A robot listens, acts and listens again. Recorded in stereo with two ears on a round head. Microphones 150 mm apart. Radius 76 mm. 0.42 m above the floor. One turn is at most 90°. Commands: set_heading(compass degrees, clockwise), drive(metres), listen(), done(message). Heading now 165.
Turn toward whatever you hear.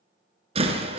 set_heading(200)
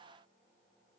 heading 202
listen()
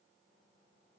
done("I heard a door slam, but can't make it out now. It was about straight ahead or 105° right.")